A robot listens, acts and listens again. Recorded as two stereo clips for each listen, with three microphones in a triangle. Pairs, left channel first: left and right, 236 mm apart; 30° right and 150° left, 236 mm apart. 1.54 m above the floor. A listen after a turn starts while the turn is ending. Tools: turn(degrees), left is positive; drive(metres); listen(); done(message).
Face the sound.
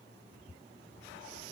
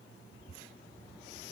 listen()
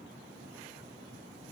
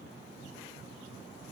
listen()
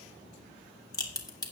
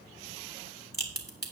turn(degrees=15)
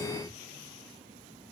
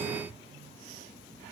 done("Facing where the crack came from. I can't hear it now.")